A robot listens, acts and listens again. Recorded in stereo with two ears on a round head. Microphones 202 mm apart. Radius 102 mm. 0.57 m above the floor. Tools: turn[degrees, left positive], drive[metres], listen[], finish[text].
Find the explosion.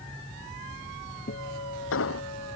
Thought: The explosion: about 65° left or 115° left.
Action: turn[65]
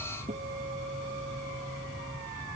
Action: listen[]
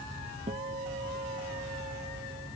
Action: finish[I heard an explosion, but can't make it out now. It was about straight ahead or 50° left.]